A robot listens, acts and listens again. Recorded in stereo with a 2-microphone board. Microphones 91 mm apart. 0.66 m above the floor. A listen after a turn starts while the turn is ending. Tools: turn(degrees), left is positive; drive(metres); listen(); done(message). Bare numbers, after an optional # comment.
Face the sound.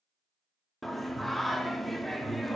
turn(30)
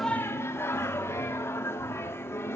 # So it is at 150° left.
turn(150)
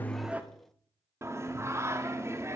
# The singing is now 35° right.
turn(-35)
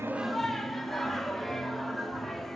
done("Facing the singing.")